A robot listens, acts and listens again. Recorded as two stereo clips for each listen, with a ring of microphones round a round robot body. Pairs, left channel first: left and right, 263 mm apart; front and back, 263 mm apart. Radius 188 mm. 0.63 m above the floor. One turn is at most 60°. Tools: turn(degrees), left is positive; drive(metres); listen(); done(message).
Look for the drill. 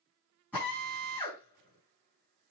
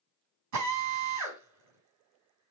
turn(degrees=60)
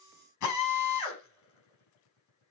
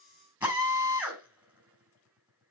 turn(degrees=60)
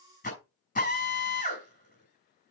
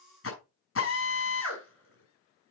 turn(degrees=30)
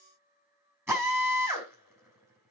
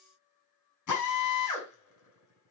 turn(degrees=-10)
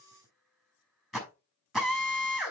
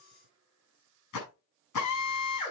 done("Found it: a drill, straight ahead.")